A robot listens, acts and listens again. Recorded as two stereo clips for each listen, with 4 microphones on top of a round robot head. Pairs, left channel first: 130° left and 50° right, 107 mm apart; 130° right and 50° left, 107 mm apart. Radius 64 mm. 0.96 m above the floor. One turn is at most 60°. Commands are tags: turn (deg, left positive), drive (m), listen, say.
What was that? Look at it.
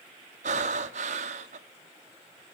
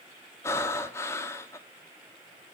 <turn deg="-60"/>
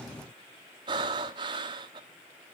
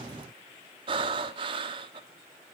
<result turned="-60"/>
<say>Facing the breathing, 1 to 2 m away.</say>